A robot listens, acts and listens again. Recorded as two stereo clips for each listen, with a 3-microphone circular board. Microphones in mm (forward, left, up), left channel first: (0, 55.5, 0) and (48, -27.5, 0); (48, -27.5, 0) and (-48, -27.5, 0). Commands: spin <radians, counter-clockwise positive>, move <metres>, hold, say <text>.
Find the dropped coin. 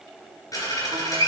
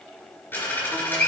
spin 1.22
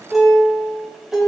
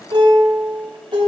say I heard a dropped coin from this way, but can't make it out now.